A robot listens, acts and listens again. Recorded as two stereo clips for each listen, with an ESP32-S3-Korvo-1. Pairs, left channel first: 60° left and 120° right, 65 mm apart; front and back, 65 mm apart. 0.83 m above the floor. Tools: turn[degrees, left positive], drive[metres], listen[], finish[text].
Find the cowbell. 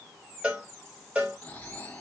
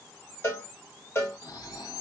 Thought: The cowbell: 50° right.
Action: turn[-50]
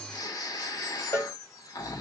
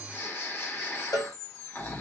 Thought: The cowbell is now 15° left.
Action: turn[15]
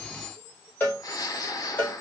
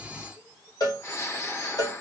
Action: finish[Facing the cowbell, 2 to 4 m away.]